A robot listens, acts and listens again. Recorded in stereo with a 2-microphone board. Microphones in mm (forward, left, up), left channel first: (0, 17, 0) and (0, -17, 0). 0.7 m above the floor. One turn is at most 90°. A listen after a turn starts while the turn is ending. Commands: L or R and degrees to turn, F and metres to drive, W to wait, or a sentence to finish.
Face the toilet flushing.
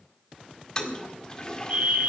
L25
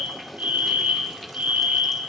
Facing the toilet flushing.